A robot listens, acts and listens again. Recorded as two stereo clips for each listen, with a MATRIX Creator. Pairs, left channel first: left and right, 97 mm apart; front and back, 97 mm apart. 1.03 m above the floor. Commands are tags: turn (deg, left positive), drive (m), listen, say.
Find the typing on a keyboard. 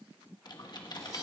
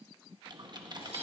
<turn deg="135"/>
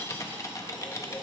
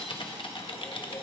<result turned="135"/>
<turn deg="30"/>
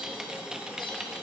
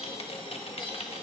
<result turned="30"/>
<say>Found it: typing on a keyboard, straight ahead, 1 to 2 m away.</say>